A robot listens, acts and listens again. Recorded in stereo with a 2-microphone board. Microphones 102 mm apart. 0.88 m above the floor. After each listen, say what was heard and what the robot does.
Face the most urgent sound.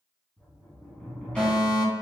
Turn 30° right.
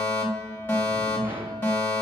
So it is at 20° left. Turn 20° left.
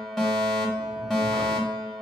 Found it: a fire alarm, straight ahead.